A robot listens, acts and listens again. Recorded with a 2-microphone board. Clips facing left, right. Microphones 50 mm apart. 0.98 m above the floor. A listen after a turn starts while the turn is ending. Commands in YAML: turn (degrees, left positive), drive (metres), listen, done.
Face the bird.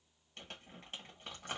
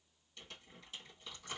listen: true
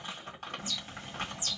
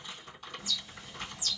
turn: 45
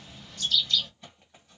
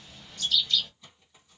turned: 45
done: "Facing the bird."